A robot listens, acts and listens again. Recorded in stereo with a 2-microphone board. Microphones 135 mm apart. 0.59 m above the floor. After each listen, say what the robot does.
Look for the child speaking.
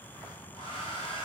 Keep listening.
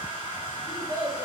Turn 45° right.
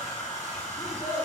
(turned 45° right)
Turn 105° right.
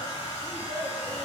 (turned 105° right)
Turn 60° right.
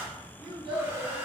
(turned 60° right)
Facing the child speaking, 2 to 4 m away.